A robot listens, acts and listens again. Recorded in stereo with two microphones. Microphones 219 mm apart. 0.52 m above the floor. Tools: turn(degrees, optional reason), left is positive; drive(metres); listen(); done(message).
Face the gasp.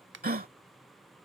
turn(degrees=-45, reason="The gasp: about 45° right or 135° right.")
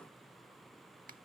listen()
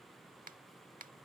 done("I heard a gasp, but can't make it out now. It was about straight ahead or 90° right.")